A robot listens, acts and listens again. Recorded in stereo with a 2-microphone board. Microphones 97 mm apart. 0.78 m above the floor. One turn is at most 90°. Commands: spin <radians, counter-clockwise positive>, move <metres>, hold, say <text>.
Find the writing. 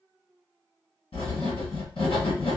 spin 1.31
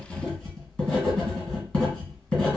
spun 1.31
spin 0.17
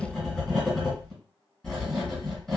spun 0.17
say Found it: writing, straight ahead.